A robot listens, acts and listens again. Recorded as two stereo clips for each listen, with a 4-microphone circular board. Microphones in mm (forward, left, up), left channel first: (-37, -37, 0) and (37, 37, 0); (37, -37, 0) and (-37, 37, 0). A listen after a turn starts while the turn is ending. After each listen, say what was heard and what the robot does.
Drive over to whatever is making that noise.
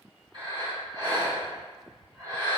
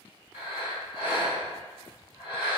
The breathing: 70° left. Turn 70° left.
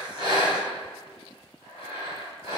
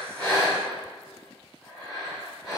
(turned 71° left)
Drive 1.0 m forward.
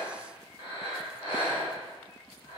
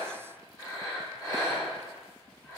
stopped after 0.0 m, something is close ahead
Something is in my way. I am facing the breathing but have not reached it.